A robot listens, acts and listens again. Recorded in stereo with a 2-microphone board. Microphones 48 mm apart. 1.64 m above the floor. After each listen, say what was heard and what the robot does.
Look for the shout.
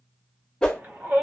The shout: about 50° right or 130° right. Turn 50° right.
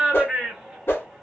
Facing the shout, 1 to 2 m away.